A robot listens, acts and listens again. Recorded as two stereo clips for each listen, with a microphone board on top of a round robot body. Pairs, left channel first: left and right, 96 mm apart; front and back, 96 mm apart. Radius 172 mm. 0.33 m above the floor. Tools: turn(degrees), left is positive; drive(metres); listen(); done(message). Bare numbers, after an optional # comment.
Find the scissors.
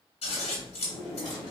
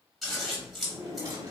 # The scissors: 90° left.
turn(90)
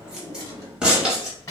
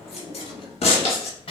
done("Facing the scissors, 1 to 2 m away.")